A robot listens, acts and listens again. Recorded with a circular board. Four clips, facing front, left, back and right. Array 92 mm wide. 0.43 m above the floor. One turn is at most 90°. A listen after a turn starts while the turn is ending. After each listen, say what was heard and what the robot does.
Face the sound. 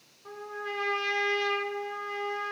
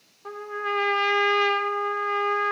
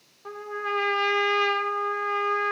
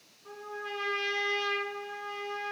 The trumpet: 120° left. Turn 90° left.
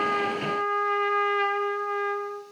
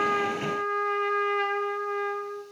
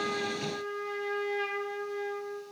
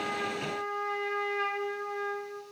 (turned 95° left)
The trumpet is now 25° left. Turn 25° left.
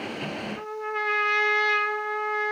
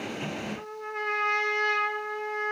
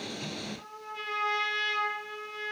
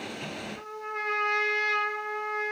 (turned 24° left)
Found it: a trumpet, straight ahead.